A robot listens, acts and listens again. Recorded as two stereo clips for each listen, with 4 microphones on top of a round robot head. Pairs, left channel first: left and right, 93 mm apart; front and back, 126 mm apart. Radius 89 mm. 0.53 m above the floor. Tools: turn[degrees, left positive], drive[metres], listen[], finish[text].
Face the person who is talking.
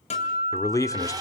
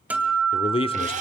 Thought: The man speaking: 40° left.
Action: turn[40]
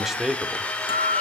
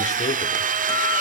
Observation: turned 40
Action: listen[]
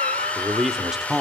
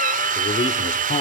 Action: finish[Facing the man speaking.]